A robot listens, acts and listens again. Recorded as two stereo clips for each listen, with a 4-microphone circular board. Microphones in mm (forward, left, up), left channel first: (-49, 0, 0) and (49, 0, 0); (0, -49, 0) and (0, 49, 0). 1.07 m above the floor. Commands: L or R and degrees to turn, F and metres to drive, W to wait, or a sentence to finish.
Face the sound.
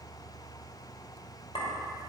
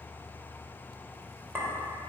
L155
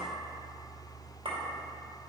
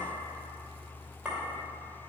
L10
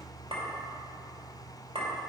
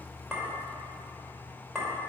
Facing the clink, 2 to 4 m away.